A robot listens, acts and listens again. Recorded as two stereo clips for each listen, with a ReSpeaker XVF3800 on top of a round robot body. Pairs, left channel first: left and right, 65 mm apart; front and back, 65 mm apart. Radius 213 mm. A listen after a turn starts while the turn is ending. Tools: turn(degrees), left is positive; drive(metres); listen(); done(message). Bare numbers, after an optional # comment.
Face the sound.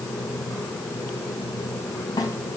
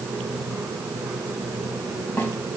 # The snare drum: 65° left.
turn(65)
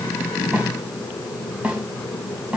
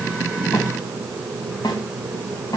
# The snare drum is now 20° right.
turn(-20)
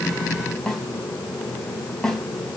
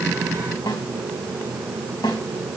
done("Facing the snare drum, 2 to 4 m away.")